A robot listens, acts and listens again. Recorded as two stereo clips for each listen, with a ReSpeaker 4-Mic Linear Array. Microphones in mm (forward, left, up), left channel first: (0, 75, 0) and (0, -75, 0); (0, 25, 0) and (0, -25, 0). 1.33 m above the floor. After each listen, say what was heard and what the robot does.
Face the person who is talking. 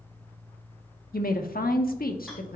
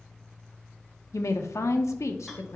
Turn 90° left.
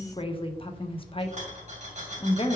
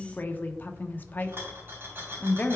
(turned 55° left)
So it is at 40° left. Turn 40° left.
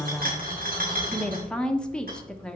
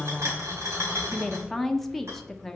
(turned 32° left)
Found it: a woman speaking, straight ahead, 1 to 2 m away.